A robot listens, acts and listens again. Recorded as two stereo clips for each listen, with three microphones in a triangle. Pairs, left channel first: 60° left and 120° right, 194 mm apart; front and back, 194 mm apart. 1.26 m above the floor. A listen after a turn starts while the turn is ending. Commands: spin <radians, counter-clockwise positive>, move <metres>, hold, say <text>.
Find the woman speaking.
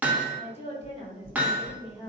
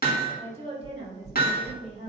spin 2.09
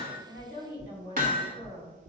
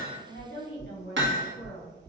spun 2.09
say Found it: a woman speaking, straight ahead.